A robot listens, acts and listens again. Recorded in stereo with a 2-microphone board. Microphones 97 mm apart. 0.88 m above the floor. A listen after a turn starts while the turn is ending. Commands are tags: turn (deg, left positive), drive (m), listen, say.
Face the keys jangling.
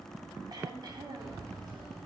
<turn deg="-55"/>
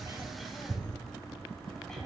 <turn deg="-60"/>
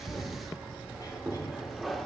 <say>Facing the keys jangling.</say>